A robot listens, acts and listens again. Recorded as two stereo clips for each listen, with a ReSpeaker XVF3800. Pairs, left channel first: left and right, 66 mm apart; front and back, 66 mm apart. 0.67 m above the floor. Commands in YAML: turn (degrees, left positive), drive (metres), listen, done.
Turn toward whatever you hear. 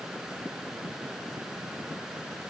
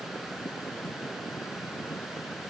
listen: true
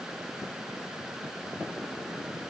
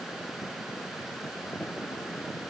listen: true
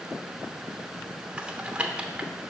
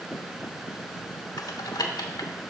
turn: -15
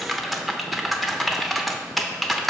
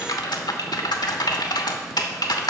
done: "Found it: typing on a keyboard, straight ahead, under 1 m away."